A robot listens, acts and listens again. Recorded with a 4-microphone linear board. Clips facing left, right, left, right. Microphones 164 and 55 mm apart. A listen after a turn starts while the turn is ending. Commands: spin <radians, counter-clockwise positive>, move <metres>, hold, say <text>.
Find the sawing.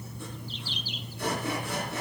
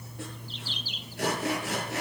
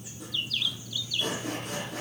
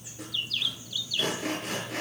spin -1.57
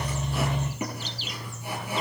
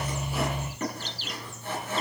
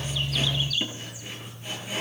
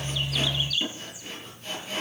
spin 0.17
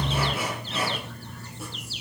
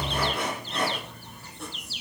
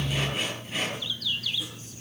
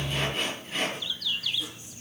say Facing the sawing, over 4 m away.